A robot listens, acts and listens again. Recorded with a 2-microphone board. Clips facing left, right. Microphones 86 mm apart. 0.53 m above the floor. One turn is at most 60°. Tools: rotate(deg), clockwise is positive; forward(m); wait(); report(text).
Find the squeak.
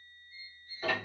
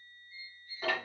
rotate(-35)
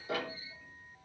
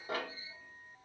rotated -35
wait()
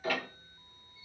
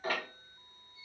wait()
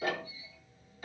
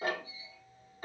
report("I heard a squeak, but can't make it out now. It was about straight ahead or 110° left.")